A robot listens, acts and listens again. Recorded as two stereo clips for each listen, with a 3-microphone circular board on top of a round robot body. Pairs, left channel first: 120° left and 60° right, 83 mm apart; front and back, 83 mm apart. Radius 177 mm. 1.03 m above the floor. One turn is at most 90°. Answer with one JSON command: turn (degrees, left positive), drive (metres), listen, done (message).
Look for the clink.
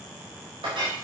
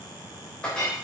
{"turn": -80}
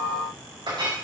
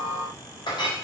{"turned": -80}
{"turn": -30}
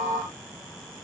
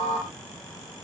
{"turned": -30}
{"listen": true}
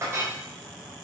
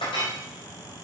{"done": "Found it: a clink, straight ahead, 2 to 4 m away."}